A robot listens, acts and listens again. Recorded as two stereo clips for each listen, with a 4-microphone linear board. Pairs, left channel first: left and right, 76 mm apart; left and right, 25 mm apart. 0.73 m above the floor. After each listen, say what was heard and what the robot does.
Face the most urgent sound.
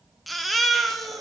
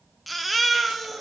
Turn 30° left.
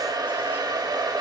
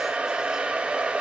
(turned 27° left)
Keep listening.
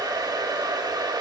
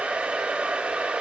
Keep listening.
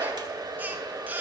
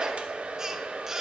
So it is at 25° right. Turn 25° right.
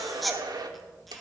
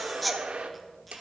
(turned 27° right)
Found it: a baby crying, straight ahead, under 1 m away.